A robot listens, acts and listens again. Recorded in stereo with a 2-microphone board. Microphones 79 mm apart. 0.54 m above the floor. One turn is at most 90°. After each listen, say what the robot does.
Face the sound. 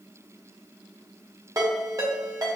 Turn 45° right.
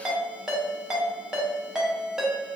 Turn 10° right.
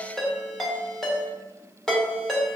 Facing the ringtone, under 1 m away.